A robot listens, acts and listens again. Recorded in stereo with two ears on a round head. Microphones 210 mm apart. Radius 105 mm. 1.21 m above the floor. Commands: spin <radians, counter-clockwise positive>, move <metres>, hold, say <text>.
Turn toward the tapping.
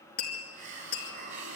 spin 0.70
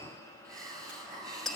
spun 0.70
say Facing the tapping.